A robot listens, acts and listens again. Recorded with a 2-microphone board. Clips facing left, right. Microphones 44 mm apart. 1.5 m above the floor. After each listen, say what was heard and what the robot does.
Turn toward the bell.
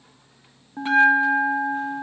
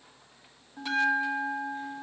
The bell: about 30° left or 150° left. Turn 30° left.
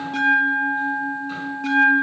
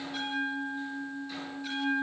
So it is at 120° left. Turn 120° left.
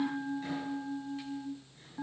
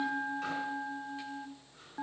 The bell is now 25° right. Turn 25° right.
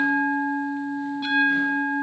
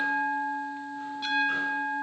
The bell is now 10° left. Turn 10° left.
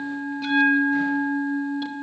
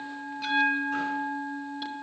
Found it: a bell, straight ahead.